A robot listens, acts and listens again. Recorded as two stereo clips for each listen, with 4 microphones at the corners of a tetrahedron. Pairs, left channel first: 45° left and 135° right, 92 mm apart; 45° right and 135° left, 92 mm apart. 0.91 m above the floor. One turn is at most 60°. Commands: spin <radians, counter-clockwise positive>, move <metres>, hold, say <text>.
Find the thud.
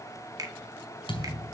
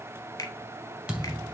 spin 0.96
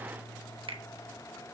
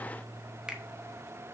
say I heard a thud from this way, but can't make it out now.